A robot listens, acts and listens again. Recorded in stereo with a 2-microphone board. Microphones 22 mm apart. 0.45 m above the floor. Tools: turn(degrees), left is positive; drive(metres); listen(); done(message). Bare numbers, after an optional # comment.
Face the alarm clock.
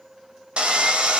listen()
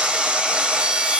listen()
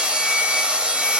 done("I can't make out an alarm clock to turn to.")